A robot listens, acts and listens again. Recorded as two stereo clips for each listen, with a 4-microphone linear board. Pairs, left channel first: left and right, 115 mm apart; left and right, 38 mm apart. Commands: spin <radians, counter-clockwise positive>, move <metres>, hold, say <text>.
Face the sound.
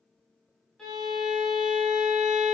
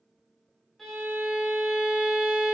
spin 0.52
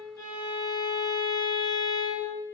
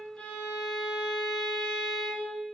spin 2.62
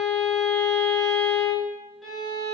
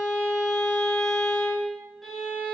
say Found it: a violin, straight ahead.